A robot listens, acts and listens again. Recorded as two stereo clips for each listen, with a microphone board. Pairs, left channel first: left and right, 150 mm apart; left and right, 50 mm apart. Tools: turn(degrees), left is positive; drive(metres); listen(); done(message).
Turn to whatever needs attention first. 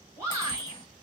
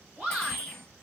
turn(degrees=-20)
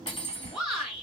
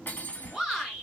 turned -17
done("Facing the shout.")